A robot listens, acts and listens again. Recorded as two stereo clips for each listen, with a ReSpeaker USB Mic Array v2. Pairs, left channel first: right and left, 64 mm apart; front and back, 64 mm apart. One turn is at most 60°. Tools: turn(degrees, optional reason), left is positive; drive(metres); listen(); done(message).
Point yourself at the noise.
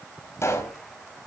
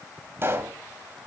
turn(degrees=-60, reason="The pop: 130° right.")
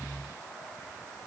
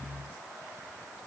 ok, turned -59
turn(degrees=-60, reason="Nothing new. It was at 70° right.")
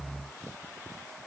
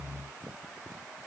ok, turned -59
turn(degrees=-15, reason="Nothing new. It was at 15° right.")
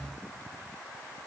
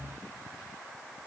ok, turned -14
done("Facing where the pop came from. I can't hear it now.")